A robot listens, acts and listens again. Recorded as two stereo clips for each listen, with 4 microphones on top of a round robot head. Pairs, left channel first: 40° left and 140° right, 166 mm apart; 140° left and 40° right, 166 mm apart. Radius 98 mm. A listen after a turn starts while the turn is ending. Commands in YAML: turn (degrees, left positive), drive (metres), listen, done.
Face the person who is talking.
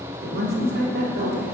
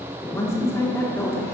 turn: -145
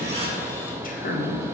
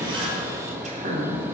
done: "Found it: a woman speaking, straight ahead."